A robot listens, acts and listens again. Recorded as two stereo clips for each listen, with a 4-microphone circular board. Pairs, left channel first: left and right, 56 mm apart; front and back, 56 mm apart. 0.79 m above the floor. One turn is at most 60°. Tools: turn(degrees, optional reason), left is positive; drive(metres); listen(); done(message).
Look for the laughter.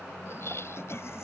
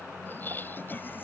turn(degrees=55, reason="The laughter: 55° left.")
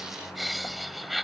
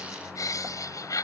done("Facing the laughter.")